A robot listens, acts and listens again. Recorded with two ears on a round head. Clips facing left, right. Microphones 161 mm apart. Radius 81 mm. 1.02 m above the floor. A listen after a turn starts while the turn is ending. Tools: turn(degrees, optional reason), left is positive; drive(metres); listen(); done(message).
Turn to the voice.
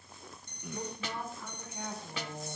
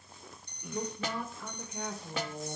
turn(degrees=-90)
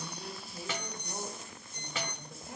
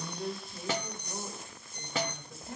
done("Found it: a woman speaking, straight ahead.")